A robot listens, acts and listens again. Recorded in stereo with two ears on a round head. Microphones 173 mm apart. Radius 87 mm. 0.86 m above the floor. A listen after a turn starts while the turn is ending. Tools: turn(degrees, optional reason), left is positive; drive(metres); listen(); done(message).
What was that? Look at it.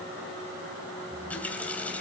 turn(degrees=30)
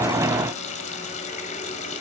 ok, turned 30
turn(degrees=140, reason="So it is at 140° left.")
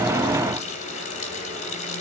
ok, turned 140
turn(degrees=40, reason="The running tap is now 40° left.")
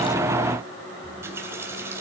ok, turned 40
turn(degrees=-15, reason="The running tap is now 15° right.")
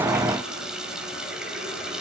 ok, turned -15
done("Facing the running tap, 2 to 4 m away.")